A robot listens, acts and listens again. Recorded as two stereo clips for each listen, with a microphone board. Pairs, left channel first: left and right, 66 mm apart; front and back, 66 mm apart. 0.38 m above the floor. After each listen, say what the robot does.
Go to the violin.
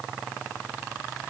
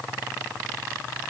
Keep listening.
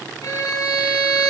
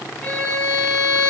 Turn 70° left.
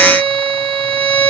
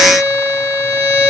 Turn 25° left.
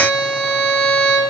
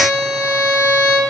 Drive 1.0 m forward.
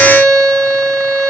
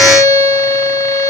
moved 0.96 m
Drive 1.0 m forward.
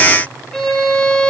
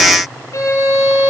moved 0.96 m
Turn 15° left.
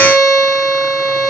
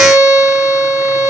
Drive 1.0 m forward.
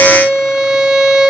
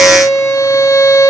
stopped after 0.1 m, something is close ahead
Arrived at the violin, straight ahead.